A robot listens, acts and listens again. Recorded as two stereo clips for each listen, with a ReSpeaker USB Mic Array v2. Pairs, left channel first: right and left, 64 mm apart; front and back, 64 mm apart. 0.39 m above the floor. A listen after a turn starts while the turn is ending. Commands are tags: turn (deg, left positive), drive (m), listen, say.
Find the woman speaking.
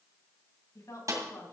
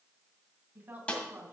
<turn deg="-120"/>
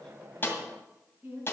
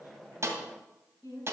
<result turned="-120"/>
<turn deg="30"/>
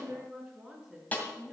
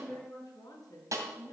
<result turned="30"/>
<turn deg="15"/>
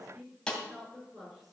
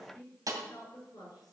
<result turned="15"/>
<say>Found it: a woman speaking, straight ahead, over 4 m away.</say>